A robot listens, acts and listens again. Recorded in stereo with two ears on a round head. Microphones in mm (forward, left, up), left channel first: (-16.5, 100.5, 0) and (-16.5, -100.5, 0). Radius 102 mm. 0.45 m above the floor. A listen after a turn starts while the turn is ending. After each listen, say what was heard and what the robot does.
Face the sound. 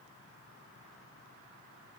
Keep listening.
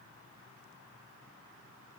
Keep listening.
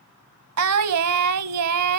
Turn 90° right.
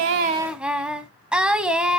Facing the singing.